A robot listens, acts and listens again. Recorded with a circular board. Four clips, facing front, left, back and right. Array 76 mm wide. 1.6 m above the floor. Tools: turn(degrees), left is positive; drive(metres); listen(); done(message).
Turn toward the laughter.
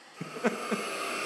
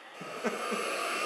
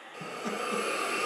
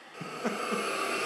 done("Found it: laughter, straight ahead.")